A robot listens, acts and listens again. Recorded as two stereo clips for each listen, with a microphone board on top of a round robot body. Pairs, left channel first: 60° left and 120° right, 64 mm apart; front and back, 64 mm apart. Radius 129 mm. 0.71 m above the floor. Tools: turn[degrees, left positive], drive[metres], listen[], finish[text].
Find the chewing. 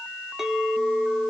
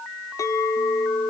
Action: listen[]
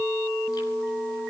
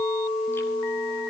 Action: listen[]
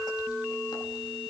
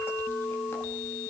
Action: finish[I can't make out chewing to turn to.]